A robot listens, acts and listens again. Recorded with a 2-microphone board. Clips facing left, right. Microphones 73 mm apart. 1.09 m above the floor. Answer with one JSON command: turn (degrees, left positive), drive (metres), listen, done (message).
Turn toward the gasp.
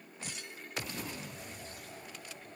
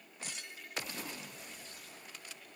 {"listen": true}
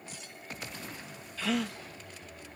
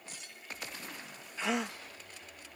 {"turn": -20}
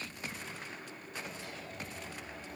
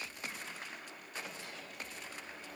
{"listen": true}
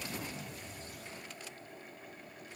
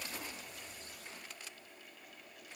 {"done": "I heard a gasp, but can't make it out now. It was about straight ahead or 140° right."}